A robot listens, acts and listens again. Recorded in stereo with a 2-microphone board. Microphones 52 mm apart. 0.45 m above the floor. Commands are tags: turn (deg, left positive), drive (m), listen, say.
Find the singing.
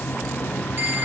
<listen/>
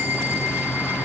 <listen/>
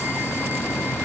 <say>I can't make out singing to turn to.</say>